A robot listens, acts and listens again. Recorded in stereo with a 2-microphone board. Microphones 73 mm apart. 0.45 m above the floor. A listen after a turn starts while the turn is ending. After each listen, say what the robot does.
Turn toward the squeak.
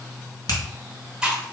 Keep listening.
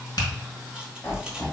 Turn 25° left.
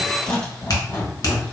Turn 130° left.
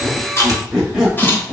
Facing the squeak, 1 to 2 m away.